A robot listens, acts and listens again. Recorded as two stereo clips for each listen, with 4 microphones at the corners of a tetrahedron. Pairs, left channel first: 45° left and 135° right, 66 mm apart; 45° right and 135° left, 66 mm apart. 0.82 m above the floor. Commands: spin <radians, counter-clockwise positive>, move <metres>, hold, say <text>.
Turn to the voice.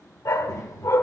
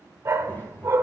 spin 0.26
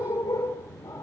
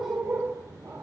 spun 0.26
say Found it: a child speaking, straight ahead, 1 to 2 m away.